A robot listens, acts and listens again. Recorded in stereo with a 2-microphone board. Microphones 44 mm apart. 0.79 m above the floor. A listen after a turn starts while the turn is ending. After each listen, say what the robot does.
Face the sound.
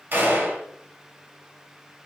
Turn 60° right.
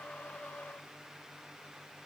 Keep listening.
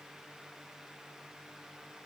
I heard a gunshot, but can't make it out now. It was about straight ahead or 60° right.